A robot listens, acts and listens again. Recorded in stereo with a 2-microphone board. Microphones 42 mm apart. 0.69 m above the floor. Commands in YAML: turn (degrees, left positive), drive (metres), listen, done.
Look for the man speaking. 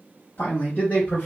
turn: 40
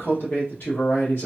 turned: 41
turn: 125
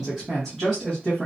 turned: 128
turn: 15
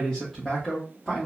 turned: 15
turn: 15
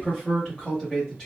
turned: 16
turn: 10
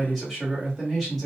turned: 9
done: "Found it: a man speaking, straight ahead, 1 to 2 m away."